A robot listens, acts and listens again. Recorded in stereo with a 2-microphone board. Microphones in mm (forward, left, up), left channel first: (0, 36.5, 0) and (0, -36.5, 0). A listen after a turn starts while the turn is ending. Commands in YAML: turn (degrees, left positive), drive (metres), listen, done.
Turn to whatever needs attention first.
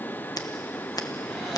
listen: true
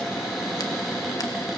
listen: true
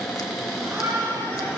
turn: -35
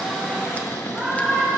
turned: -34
done: "Facing the shout, 2 to 4 m away."